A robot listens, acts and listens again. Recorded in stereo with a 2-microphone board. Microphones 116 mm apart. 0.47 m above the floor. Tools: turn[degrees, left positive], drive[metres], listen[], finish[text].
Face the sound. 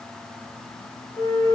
Thought: The flute: about 50° right or 130° right.
Action: turn[-50]
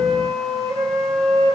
Thought: So it is at 80° right.
Action: turn[-80]
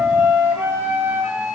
Thought: The flute is now 20° right.
Action: turn[-20]
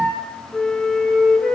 Action: finish[Facing the flute, over 4 m away.]